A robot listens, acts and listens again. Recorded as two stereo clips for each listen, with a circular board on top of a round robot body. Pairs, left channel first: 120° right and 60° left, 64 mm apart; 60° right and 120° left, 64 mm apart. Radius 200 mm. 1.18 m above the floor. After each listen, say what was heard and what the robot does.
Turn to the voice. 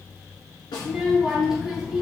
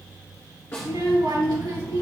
The child speaking: 140° left. Turn 140° left.
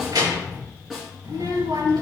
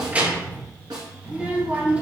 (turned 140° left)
The child speaking is now 50° left. Turn 50° left.
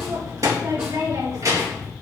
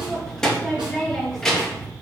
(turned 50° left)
The child speaking is now 20° left. Turn 20° left.
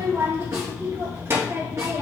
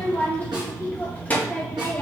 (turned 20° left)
Facing the child speaking, 2 to 4 m away.